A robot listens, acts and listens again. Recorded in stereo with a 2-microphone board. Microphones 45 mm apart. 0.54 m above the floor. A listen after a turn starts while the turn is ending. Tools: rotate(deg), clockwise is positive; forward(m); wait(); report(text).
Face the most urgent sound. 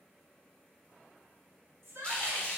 rotate(65)
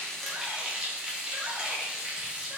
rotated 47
wait()
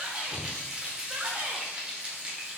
rotate(35)
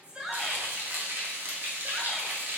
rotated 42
wait()
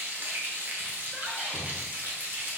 wait()
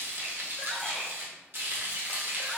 report("Facing where the shout came from. I can't hear it now.")